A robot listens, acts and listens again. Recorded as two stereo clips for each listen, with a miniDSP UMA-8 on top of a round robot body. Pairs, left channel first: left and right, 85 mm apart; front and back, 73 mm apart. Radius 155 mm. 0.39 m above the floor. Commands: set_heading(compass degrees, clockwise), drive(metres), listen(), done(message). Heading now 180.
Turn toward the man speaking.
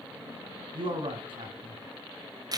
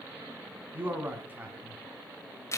set_heading(295)
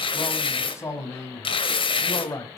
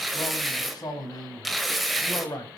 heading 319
set_heading(284)
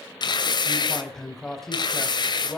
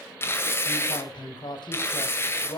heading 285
done("Facing the man speaking.")